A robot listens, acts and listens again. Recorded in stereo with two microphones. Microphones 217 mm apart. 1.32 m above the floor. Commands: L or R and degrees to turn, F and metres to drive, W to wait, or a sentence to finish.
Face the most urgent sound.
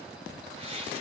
W
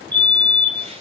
L30
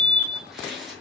L145
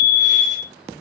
Found it: a fire alarm, straight ahead, 2 to 4 m away.